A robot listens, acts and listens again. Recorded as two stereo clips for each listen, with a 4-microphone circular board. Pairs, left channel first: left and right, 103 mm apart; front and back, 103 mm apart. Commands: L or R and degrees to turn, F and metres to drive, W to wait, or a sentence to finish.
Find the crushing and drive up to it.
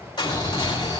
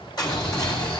L50
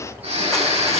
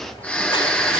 W
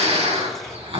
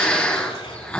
W
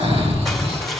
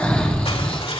F1.0
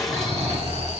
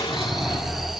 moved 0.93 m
W
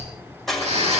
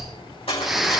F1.0
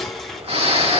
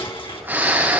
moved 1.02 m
F1.0
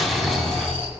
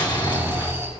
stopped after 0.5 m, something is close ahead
W
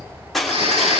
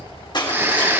Arrived at the crushing, straight ahead.